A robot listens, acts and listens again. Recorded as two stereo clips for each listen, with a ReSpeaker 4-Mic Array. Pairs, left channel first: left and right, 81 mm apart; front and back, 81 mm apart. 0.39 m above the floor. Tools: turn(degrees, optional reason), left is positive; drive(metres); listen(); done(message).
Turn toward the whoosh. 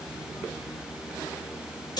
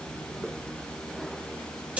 listen()
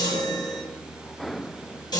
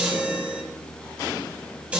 listen()
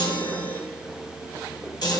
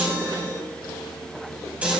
done("I can't make out a whoosh, only a chime.")